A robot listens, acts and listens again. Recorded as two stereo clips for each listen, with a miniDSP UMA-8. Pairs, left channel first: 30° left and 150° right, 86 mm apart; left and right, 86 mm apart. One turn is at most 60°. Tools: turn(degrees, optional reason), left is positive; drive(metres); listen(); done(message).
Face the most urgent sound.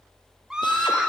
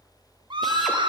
turn(degrees=-60, reason="The scream: 65° right.")
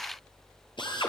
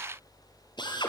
listen()
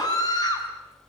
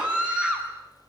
turn(degrees=-10, reason="The scream is now 10° right.")
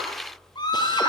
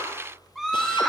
done("Found it: a scream, straight ahead.")